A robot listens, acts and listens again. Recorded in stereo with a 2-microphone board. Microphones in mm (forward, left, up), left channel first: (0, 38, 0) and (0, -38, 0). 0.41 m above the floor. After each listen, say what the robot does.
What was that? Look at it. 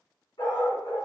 Turn 90° left.
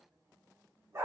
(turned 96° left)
Turn 35° right.
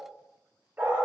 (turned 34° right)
Turn 25° right.
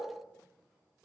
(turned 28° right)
Keep listening.
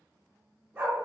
Turn 25° right.
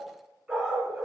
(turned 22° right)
Turn 10° right.
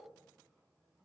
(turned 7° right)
Keep listening.
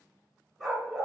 Found it: a dog barking, straight ahead.